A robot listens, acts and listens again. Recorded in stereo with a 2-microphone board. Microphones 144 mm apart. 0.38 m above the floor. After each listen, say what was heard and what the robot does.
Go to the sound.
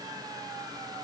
Keep listening.
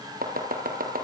Turn 90° right.
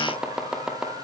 Drive 1.0 m forward.
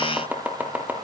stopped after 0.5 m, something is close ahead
The chopping is now 10° right. Turn 10° right.
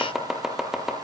Something is in my way. I am facing the chopping but have not reached it.